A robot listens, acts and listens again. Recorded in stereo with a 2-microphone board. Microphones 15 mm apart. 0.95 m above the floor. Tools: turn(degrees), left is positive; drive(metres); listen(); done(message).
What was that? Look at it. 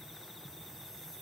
listen()
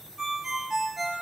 turn(degrees=-30)
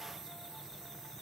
listen()
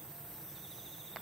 listen()
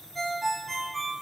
done("Facing the ringtone.")